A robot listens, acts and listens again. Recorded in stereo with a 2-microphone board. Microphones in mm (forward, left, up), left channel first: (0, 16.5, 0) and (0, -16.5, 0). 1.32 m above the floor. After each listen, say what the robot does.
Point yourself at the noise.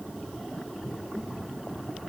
Keep listening.
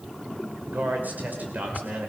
Turn 60° right.
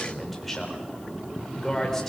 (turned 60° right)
Turn 10° left.
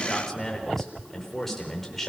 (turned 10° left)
Facing the man speaking.